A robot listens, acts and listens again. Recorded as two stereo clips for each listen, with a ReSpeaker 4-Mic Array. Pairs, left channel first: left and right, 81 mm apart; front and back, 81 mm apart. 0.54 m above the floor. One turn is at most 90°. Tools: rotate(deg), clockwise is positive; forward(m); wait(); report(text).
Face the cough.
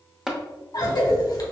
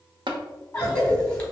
rotate(-75)
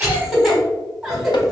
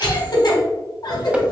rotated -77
report("Found it: a cough, straight ahead, 1 to 2 m away.")